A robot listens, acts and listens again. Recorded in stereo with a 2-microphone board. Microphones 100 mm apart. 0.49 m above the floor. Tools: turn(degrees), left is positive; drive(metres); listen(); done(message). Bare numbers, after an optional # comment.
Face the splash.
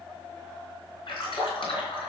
# The splash: about 55° left or 125° left.
turn(55)
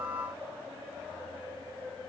listen()
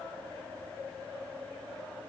done("I heard a splash, but can't make it out now. It was about straight ahead or 70° left.")